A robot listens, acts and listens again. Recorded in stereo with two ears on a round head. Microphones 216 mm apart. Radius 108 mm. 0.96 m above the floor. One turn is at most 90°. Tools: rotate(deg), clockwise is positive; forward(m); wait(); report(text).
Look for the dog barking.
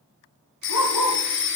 rotate(-90)
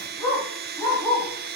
report("Facing the dog barking, over 4 m away.")